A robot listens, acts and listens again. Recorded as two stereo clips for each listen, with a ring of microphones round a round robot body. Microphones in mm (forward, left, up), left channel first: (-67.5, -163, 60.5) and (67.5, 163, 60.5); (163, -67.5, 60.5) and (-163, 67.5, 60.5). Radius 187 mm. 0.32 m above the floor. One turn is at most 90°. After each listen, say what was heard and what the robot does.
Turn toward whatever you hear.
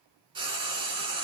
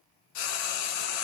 The frying: 10° right. Turn 10° right.
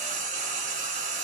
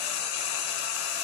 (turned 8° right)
Found it: frying, straight ahead, 1 to 2 m away.